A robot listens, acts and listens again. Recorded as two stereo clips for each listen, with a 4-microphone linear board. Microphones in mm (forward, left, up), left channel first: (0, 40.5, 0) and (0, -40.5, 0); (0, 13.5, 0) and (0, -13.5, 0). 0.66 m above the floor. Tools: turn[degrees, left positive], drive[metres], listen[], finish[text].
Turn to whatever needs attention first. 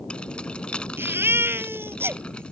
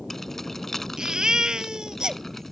Thought: The baby crying: about 30° right or 150° right.
Action: turn[-30]
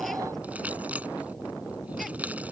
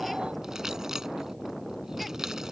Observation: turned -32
Action: listen[]
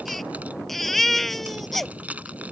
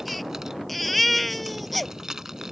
Action: finish[Found it: a baby crying, straight ahead.]